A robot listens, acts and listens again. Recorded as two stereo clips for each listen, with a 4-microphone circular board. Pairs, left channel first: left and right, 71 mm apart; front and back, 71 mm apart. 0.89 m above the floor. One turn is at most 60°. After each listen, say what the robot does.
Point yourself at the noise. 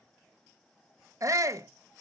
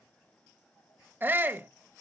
Turn 60° right.
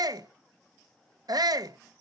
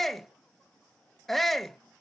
Turn 60° right.
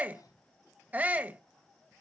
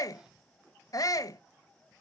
Turn 25° right.
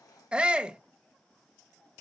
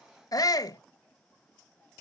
Turn 15° right.
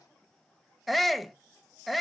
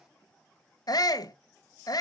Facing the shout.